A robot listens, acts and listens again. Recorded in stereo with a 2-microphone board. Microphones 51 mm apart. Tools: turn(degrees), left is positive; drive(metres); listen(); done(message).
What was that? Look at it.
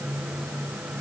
listen()
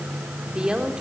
turn(degrees=-15)
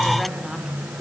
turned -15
listen()
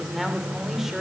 turn(degrees=-30)
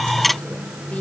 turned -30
listen()
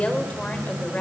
turn(degrees=25)
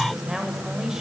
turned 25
turn(degrees=-10)
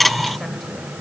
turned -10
listen()
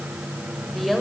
done("Facing the woman speaking, over 4 m away.")